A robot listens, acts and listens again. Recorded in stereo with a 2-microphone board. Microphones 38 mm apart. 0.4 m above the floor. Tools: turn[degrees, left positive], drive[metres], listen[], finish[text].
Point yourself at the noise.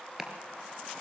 Action: turn[-30]
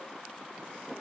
Action: listen[]
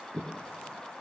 Thought: So it is at 145° right.
Action: turn[-145]
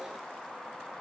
Action: listen[]
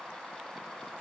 Action: listen[]
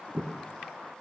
Thought: The chopping is now 35° right.
Action: turn[-35]
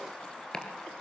Thought: The chopping is now 20° left.
Action: turn[20]
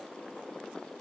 Action: listen[]
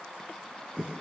Action: finish[Found it: chopping, straight ahead.]